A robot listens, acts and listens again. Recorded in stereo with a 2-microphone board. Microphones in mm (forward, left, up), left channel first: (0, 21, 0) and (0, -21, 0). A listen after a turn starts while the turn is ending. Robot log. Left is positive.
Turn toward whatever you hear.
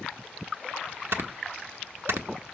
note: The snoring: about 65° right or 115° right.
cmd yaw -65
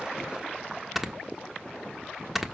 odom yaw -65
end: Facing the snoring, 1 to 2 m away.